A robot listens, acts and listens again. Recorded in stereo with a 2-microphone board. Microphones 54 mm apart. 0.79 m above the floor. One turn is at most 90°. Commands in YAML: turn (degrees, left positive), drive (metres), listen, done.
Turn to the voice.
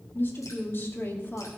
turn: 35
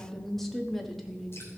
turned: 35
done: "Found it: a woman speaking, straight ahead, 1 to 2 m away."